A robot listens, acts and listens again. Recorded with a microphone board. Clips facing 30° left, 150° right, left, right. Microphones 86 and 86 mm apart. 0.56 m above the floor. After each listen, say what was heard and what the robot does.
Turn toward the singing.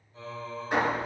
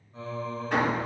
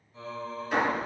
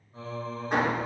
The singing: 120° right. Turn 120° right.
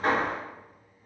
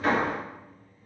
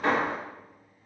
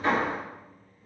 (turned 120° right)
The singing is now 10° left. Turn 10° left.
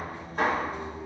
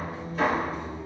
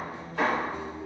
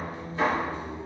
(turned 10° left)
Facing the singing, under 1 m away.